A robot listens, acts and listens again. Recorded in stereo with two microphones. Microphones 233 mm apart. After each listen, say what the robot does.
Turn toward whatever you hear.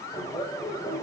Turn 25° left.
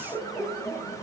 Facing the laughter.